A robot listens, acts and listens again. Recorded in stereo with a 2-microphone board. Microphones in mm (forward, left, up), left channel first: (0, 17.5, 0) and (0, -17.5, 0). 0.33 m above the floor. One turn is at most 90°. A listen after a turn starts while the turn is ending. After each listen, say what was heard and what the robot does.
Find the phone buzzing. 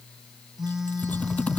Turn 30° right.
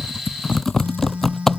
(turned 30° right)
So it is at 140° right. Turn 90° right.
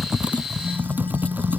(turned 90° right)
Nothing new. It was at 50° right. Turn 50° right.
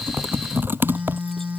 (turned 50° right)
The phone buzzing is now 50° right. Turn 50° right.
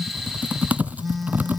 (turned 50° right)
Found it: a phone buzzing, straight ahead.